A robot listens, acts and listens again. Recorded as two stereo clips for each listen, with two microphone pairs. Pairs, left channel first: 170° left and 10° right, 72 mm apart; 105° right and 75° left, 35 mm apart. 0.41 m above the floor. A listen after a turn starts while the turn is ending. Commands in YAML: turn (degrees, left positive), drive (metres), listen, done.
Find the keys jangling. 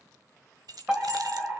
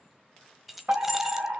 done: "Found it: keys jangling, straight ahead."